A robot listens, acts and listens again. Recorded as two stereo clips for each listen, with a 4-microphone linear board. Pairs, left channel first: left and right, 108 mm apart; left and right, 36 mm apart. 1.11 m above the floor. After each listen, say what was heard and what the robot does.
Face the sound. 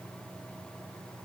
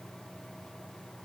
Keep listening.
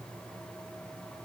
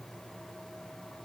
Keep listening.
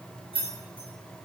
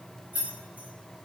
The keys jangling: about 55° right or 125° right. Turn 55° right.
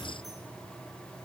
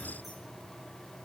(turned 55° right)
Keep listening.
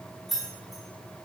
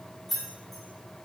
Found it: keys jangling, straight ahead, 1 to 2 m away.